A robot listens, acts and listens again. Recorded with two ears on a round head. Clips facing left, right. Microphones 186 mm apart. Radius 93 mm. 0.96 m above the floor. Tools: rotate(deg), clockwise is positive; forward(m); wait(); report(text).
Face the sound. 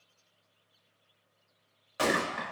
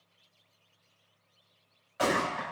rotate(-60)
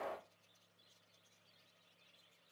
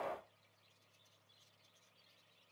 rotate(-15)
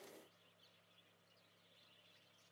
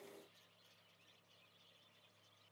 report("I heard a gunshot from this way, but can't make it out now.")